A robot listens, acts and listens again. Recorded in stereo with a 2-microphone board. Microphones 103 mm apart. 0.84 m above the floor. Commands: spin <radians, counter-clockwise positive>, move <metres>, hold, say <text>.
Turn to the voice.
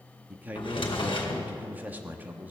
spin -0.35
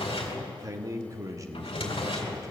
spin -2.44
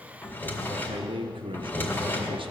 spin -1.13
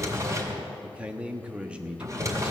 spin -0.17
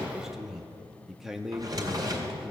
say Facing the man speaking.